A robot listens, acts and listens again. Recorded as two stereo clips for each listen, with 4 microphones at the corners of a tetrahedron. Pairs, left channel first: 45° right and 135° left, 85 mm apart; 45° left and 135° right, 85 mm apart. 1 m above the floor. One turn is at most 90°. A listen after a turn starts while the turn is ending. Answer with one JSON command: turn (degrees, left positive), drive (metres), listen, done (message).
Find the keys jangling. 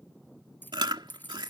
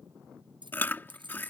{"turn": -90}
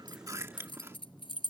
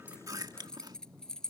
{"turn": -35}
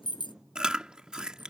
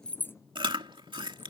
{"listen": true}
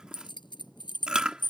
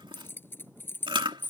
{"turn": -20}
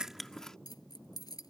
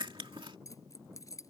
{"done": "Found it: keys jangling, straight ahead."}